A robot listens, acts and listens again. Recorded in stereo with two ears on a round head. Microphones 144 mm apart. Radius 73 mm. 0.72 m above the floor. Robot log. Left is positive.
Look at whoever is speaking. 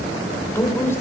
note: The woman speaking: about 20° left or 160° left.
cmd yaw +20
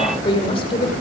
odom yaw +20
note: So it is at 140° left.
cmd yaw +140
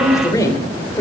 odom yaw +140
note: The woman speaking is now 20° left.
cmd yaw +20
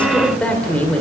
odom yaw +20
note: The woman speaking is now 10° left.
cmd yaw +10
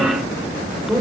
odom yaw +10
end: Found it: a woman speaking, straight ahead, 2 to 4 m away.